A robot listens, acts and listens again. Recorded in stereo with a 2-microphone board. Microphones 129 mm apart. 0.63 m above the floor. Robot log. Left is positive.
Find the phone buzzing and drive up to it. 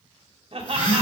note: The phone buzzing: about 40° left or 140° left.
cmd yaw +40
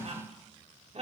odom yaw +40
cmd idle
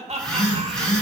cmd fwd 1.0
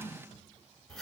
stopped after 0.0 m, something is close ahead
end: Something is in my way. I am facing the phone buzzing but have not reached it.